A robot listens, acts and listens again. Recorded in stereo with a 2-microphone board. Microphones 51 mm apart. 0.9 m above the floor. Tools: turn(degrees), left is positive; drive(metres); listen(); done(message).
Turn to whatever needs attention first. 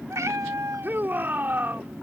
turn(degrees=-40)
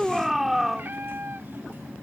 done("Found it: a shout, straight ahead.")